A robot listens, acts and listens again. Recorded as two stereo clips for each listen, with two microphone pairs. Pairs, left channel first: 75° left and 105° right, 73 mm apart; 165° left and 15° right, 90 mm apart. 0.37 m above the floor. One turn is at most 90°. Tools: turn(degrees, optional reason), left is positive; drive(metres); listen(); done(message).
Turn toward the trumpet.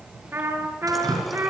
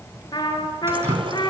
turn(degrees=-90, reason="The trumpet: 160° right.")
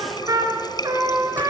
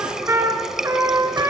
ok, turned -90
turn(degrees=-75, reason="The trumpet is now 75° right.")
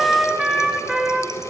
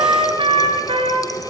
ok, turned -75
turn(degrees=-25, reason="The trumpet is now 25° right.")
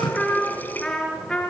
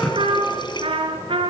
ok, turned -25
done("Facing the trumpet, 2 to 4 m away.")